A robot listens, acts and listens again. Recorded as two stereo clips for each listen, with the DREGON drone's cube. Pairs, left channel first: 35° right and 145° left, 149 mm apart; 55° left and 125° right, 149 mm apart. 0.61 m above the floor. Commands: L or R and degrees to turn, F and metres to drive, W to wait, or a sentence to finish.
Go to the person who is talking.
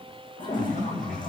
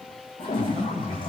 R60
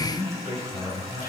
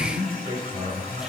L15
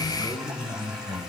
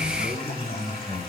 F1.0
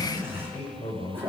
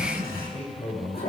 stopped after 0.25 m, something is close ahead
L10
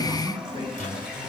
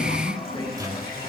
W
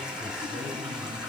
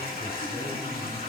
W
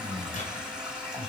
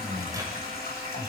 Something is in my way. I am facing the man speaking but have not reached it.